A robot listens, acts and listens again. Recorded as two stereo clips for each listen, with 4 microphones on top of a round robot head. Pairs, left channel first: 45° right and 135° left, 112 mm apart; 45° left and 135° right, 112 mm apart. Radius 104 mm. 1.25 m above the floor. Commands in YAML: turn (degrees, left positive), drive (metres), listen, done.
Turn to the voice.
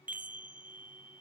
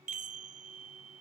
listen: true
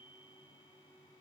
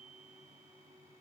listen: true
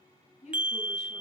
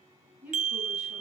turn: -60
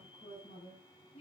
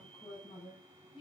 done: "Found it: a woman speaking, straight ahead."